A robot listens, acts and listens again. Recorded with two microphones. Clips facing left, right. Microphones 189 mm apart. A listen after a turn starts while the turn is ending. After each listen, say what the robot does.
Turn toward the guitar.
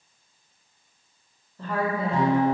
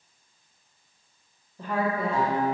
Turn 40° left.
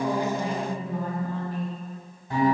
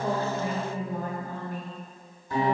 Turn 100° left.
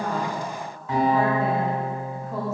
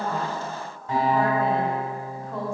Turn 35° right.
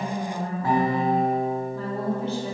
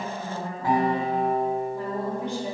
Turn 15° right.
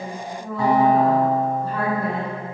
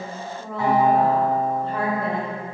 Found it: a guitar, straight ahead.